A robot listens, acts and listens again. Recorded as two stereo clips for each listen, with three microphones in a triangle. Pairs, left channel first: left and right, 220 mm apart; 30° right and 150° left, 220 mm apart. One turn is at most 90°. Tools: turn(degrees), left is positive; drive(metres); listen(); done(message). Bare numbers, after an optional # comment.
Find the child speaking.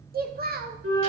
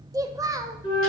# The child speaking: 135° right.
turn(-90)
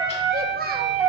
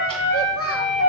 # The child speaking is now 40° right.
turn(-40)
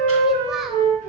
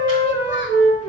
listen()
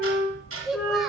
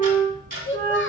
done("Facing the child speaking, under 1 m away.")